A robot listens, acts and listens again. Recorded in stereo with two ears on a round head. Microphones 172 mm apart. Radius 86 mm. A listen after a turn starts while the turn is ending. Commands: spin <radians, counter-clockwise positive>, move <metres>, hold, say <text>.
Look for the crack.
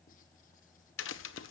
spin 1.31
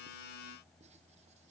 hold
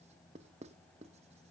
say I heard a crack, but can't make it out now. It was about straight ahead or 30° left.